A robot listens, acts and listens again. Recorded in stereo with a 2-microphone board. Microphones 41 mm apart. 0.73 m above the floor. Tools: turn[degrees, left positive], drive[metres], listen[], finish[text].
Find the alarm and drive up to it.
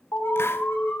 Thought: The alarm: about 60° left or 120° left.
Action: turn[60]
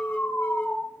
Thought: So it is at 55° left.
Action: turn[55]
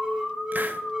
Thought: The alarm is now 10° right.
Action: turn[-10]
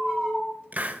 Action: drive[1.0]
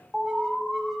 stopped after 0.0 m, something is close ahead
Action: finish[Blocked. The alarm is further on, straight ahead.]